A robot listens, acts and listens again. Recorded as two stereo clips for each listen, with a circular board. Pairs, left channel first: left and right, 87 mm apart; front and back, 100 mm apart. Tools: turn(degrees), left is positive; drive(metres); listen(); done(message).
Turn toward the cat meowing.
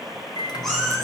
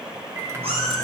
turn(degrees=175)
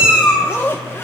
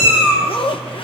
turn(degrees=-15)
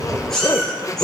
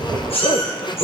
done("Found it: a cat meowing, straight ahead, over 4 m away.")